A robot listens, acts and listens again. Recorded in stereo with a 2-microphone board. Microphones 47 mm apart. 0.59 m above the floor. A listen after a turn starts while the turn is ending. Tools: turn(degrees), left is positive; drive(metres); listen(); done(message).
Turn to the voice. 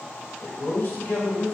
turn(degrees=60)
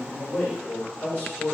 turn(degrees=30)
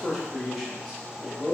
turn(degrees=-10)
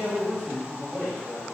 turn(degrees=-10)
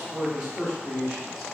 turn(degrees=-10)
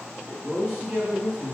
done("Facing the man speaking.")